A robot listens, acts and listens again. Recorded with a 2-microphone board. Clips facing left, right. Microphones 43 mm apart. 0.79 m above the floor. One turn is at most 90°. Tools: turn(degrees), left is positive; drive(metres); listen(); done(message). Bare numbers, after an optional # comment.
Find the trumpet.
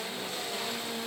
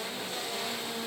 listen()
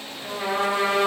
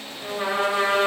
# The trumpet: about 25° right or 155° right.
turn(-25)
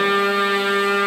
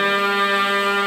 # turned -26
# So it is at 130° right.
turn(-90)
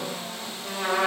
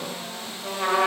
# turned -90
# The trumpet is now 35° right.
turn(-35)
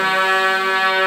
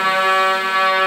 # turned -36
done("Facing the trumpet.")